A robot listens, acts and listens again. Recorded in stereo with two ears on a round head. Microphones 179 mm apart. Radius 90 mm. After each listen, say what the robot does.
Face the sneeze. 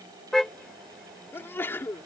Turn 30° left.
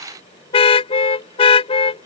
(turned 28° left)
Keep listening.
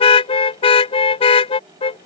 I heard a sneeze, but can't make it out now. It was about 15° right or 140° left.